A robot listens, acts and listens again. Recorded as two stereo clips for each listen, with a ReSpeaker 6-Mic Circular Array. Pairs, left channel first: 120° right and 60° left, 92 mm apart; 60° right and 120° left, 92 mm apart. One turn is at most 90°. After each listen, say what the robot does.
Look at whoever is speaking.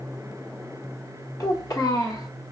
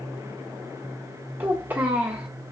Turn 90° right.
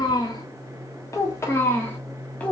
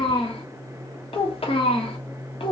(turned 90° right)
Turn 45° right.
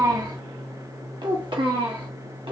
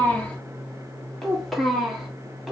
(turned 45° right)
Turn 30° left.
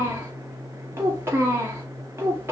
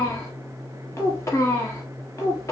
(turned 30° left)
Facing the child speaking.